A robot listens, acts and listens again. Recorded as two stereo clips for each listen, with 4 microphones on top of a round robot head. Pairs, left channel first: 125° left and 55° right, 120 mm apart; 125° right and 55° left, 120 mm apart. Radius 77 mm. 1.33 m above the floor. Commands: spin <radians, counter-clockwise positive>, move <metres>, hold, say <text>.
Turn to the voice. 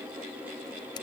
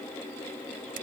hold
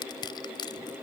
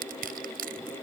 hold
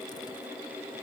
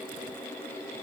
say I can't make out anyone speaking, only crushing.